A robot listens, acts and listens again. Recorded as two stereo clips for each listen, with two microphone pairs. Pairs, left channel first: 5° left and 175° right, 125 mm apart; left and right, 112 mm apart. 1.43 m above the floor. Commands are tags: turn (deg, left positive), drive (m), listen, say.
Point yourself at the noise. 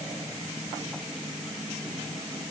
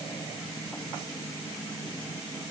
<listen/>
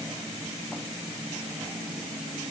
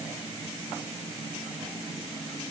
<listen/>
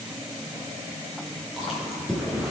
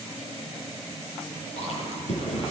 <turn deg="95"/>
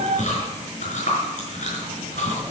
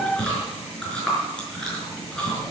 <turn deg="10"/>
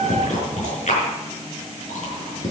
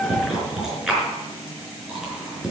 <say>Facing the chewing, over 4 m away.</say>